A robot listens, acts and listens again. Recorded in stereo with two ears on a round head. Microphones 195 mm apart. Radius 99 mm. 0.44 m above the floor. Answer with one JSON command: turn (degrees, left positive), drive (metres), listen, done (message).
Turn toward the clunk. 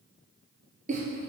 {"listen": true}
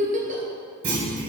{"turn": -65}
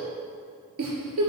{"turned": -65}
{"listen": true}
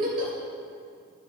{"done": "I heard a clunk, but can't make it out now. It was about straight ahead or 50° right."}